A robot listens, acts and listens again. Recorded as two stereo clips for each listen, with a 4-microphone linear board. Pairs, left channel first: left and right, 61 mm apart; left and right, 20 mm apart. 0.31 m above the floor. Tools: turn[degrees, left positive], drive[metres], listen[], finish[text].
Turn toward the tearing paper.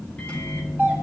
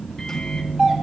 Action: listen[]
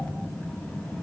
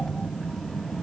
Action: listen[]
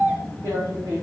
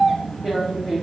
Thought: The tearing paper: about 65° right or 115° right.
Action: turn[-65]
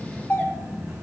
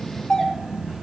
Action: listen[]
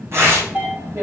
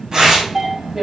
Thought: So it is at 50° right.
Action: turn[-50]
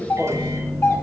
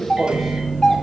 Action: listen[]
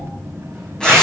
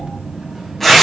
Thought: The tearing paper is now 15° left.
Action: turn[15]
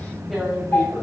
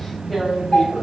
Action: finish[Found it: tearing paper, straight ahead.]